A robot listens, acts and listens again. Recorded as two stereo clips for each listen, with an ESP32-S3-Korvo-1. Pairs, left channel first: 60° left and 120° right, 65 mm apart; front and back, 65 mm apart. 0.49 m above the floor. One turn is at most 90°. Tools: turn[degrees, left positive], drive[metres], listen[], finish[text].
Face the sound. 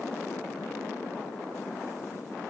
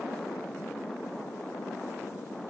Action: listen[]
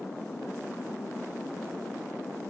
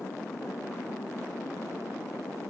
Action: listen[]
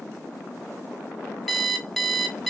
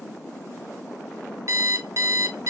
Thought: The alarm clock: 150° left.
Action: turn[90]
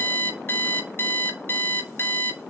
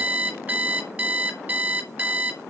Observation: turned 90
Thought: The alarm clock is now 115° left.
Action: turn[90]
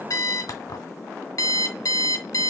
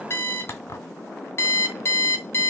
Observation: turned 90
Thought: The alarm clock is now 45° left.
Action: turn[45]
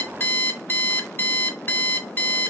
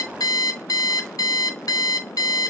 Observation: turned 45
Thought: The alarm clock is now 10° left.
Action: turn[10]
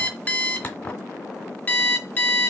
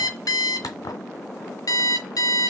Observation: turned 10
Action: finish[Found it: an alarm clock, straight ahead, 1 to 2 m away.]